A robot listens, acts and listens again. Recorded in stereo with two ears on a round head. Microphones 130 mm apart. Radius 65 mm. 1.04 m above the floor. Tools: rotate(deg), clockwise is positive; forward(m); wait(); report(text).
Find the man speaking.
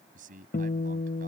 rotate(60)
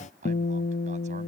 rotate(50)
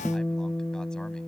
wait()
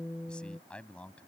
rotate(-10)
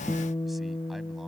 wait()
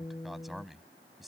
report("Facing the man speaking.")